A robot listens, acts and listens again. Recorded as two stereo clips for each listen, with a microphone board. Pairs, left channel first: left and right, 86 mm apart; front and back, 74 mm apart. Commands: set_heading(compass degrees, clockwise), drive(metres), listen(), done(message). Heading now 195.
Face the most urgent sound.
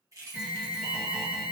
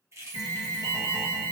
set_heading(10)
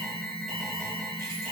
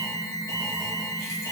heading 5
done("Found it: an alarm, straight ahead, 1 to 2 m away.")